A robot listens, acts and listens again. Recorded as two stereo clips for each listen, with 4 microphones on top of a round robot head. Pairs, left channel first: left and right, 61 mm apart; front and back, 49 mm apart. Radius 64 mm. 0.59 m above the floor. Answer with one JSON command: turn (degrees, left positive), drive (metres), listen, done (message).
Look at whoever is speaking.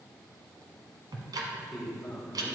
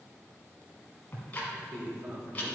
{"turn": 175}
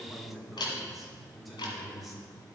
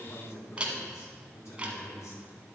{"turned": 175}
{"done": "Facing the man speaking."}